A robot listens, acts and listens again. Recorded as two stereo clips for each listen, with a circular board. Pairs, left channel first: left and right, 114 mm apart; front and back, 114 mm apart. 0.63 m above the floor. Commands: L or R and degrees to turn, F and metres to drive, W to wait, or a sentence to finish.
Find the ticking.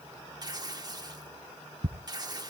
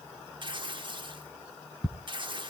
R90
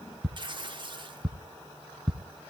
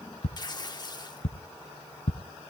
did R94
Facing the ticking, under 1 m away.